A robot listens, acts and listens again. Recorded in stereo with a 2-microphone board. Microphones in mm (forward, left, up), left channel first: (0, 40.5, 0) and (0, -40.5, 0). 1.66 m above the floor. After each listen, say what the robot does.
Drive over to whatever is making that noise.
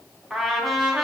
Turn 30° left.
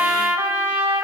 Turn 30° right.
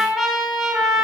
Drive 1.0 m forward.
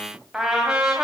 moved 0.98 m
Turn 10° right.
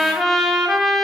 Drive 1.0 m forward.
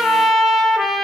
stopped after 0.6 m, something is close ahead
I am next to the trumpet.